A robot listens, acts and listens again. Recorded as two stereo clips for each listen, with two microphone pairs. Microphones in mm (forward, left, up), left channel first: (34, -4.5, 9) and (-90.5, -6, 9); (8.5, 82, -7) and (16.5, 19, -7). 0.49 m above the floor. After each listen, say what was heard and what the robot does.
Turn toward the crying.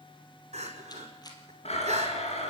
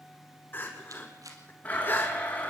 The crying: 155° left. Turn 155° left.
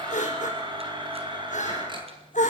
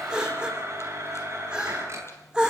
Facing the crying, over 4 m away.